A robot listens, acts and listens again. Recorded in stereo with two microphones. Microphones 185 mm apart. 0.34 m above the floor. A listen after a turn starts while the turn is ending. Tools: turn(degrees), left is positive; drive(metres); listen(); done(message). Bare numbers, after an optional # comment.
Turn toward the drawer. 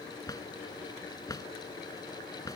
# The drawer: about 20° left or 160° left.
turn(20)
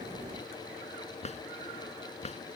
# So it is at 140° left.
turn(140)
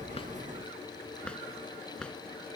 done("Found it: a drawer, straight ahead.")